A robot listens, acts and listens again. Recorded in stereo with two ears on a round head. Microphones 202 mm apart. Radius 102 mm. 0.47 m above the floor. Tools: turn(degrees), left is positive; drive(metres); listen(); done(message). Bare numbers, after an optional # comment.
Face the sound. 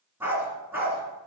turn(-30)
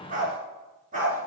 # So it is at 145° right.
turn(-145)
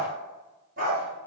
# The dog barking is now 40° right.
turn(-40)
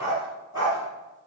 # The dog barking is now 15° right.
turn(-15)
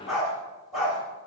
done("Facing the dog barking, over 4 m away.")